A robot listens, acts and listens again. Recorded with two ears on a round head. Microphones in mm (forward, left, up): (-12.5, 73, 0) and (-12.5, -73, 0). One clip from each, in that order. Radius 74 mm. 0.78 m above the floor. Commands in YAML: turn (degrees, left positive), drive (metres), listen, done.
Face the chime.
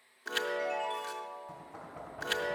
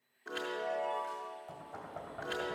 turn: 70
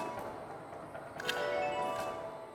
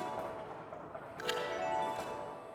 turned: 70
done: "Facing the chime, under 1 m away."